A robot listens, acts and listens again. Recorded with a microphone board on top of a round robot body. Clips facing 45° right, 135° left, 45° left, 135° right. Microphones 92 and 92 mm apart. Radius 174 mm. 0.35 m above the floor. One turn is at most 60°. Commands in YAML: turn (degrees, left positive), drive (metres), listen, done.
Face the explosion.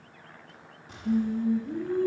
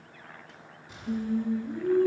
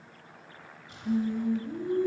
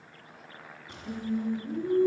turn: -60
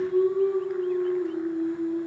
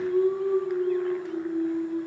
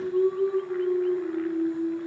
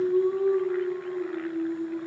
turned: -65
turn: -25
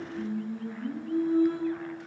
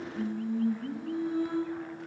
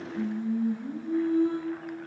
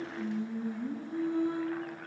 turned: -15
turn: -10
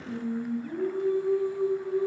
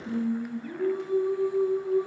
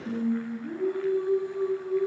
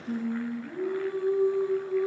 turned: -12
done: "I heard an explosion from this way, but can't make it out now."